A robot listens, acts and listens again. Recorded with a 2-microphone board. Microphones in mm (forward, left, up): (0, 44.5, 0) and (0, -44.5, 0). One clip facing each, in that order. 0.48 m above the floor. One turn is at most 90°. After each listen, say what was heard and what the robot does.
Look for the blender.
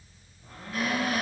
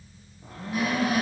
Turn 90° right.
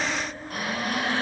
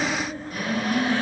Found it: a blender, straight ahead, over 4 m away.